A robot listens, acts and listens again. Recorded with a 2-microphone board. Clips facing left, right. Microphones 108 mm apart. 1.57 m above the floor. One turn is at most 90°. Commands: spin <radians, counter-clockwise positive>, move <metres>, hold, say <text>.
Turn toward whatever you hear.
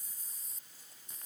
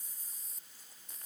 hold
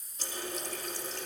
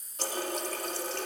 spin -1.13
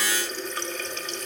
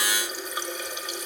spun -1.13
spin -0.26
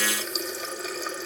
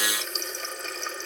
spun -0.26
say Facing the running tap.